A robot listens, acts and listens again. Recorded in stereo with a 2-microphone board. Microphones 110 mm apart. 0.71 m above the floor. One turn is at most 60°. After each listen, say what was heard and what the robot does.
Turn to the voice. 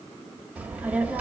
Turn 30° right.
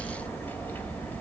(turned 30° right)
So it is at 15° left. Turn 15° left.
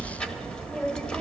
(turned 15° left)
Found it: a child speaking, straight ahead.